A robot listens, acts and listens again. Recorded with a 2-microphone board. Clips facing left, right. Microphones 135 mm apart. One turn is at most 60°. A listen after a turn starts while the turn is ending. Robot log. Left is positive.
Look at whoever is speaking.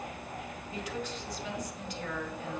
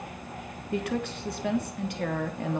note: The woman speaking: about 60° right or 120° right.
cmd yaw -60
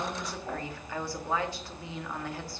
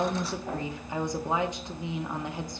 note: So it is at 20° right.
cmd yaw -20
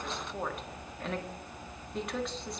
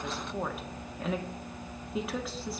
end: Facing the woman speaking, 1 to 2 m away.